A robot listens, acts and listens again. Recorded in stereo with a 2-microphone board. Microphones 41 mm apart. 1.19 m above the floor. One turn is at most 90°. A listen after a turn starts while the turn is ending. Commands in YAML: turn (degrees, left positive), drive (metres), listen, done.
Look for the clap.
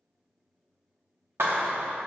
turn: -90
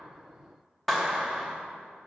done: "Found it: a clap, straight ahead, 1 to 2 m away."